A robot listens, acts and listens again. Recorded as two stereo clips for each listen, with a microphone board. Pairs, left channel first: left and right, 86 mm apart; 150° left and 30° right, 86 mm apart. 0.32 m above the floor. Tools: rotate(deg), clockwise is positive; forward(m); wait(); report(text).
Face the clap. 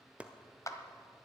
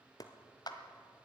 rotate(-130)
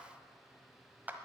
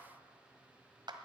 rotate(25)
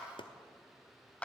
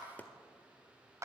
rotate(-15)
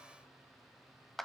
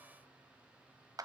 report("Facing the clap, 1 to 2 m away.")